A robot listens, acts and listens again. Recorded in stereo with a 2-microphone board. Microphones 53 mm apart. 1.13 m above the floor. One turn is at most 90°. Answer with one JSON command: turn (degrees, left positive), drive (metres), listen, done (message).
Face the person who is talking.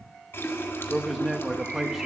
{"turn": -30}
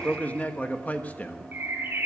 {"turn": 30}
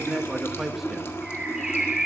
{"done": "Found it: a man speaking, straight ahead, 1 to 2 m away."}